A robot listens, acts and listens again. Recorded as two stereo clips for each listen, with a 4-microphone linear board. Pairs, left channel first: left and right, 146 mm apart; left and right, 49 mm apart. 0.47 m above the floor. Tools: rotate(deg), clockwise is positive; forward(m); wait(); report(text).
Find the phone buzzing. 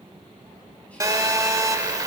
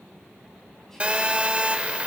rotate(25)
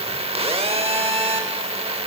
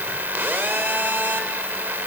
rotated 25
rotate(130)
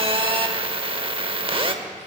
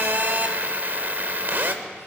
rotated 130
rotate(45)
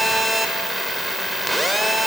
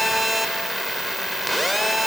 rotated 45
report("Found it: a phone buzzing, straight ahead.")